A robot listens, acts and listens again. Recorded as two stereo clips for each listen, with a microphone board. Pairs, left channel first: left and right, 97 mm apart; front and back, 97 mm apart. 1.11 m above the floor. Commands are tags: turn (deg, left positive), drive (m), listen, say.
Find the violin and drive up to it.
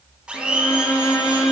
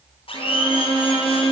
<turn deg="145"/>
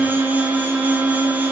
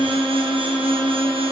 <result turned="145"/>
<drive m="1.0"/>
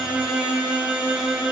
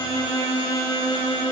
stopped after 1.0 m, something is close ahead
<turn deg="-10"/>
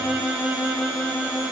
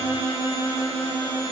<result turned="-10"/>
<say>Arrived at the violin, straight ahead.</say>